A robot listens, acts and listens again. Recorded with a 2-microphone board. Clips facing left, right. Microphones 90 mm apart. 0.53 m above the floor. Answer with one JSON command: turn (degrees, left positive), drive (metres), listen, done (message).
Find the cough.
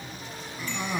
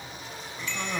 {"turn": 30}
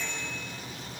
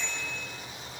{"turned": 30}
{"listen": true}
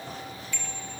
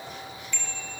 {"listen": true}
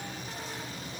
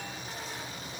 {"done": "I heard a cough, but can't make it out now. It was about 20° right or 140° left."}